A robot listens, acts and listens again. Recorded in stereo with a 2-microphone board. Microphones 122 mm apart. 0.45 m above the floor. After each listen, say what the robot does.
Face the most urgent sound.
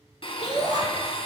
Turn 65° left.
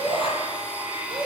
Turn 45° left.
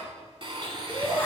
Turn 10° left.
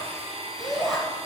Found it: a shout, straight ahead.